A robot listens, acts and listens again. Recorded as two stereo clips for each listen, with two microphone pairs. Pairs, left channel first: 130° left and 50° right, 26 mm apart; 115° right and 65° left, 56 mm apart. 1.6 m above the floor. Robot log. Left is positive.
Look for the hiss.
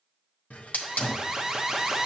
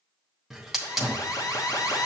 note: The hiss: 145° left.
cmd yaw +145
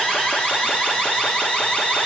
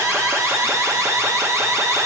cmd idle
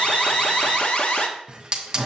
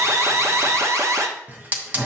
end: Facing the hiss.